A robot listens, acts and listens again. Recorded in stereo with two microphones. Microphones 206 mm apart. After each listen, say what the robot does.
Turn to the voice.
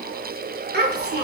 Turn 55° right.
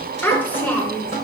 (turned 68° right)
Turn 10° left.
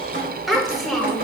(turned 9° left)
Facing the child speaking, 1 to 2 m away.